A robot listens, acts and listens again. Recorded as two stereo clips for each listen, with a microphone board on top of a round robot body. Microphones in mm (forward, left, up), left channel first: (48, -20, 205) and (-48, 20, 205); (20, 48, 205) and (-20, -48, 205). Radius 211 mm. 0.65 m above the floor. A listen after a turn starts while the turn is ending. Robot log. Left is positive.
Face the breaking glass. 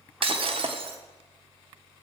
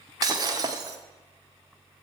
note: The breaking glass: 170° right.
cmd yaw -170
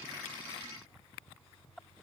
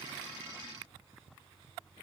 end: Facing where the breaking glass came from. I can't hear it now.